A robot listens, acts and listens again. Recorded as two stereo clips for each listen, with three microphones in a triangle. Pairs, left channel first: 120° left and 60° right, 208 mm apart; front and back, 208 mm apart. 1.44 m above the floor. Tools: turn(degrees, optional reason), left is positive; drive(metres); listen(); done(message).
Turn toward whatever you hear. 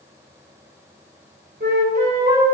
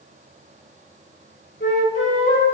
turn(degrees=-25, reason="The flute: 25° right.")
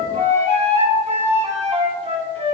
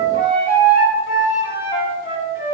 done("Found it: a flute, straight ahead, 2 to 4 m away.")